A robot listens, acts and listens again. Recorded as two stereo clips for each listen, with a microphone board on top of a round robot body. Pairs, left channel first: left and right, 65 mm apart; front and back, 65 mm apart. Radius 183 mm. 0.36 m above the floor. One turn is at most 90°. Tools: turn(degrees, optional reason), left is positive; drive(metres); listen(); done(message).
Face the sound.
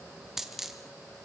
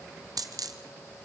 turn(degrees=-90, reason="The dropped coin: 175° right.")
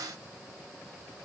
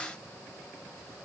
turn(degrees=-85, reason="Nothing new. It was at 85° right.")
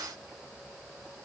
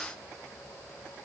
done("Facing where the dropped coin came from. I can't hear it now.")